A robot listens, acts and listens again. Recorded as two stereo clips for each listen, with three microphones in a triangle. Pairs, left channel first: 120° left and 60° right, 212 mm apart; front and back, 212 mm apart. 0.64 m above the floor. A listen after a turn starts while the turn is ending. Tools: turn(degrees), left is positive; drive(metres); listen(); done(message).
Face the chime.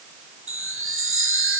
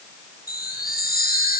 turn(degrees=-45)
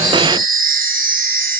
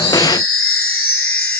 turn(degrees=-10)
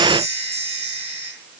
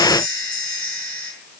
done("Found it: a chime, straight ahead, over 4 m away.")